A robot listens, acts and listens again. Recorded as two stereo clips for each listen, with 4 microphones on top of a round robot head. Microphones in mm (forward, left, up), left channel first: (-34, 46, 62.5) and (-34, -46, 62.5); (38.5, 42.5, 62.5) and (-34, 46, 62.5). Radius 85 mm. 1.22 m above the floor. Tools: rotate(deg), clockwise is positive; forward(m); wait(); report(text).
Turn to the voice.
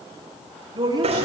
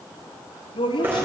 rotate(30)
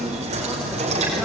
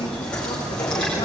wait()
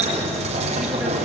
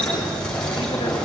wait()
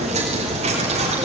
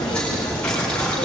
report("Facing where the woman speaking came from. I can't hear it now.")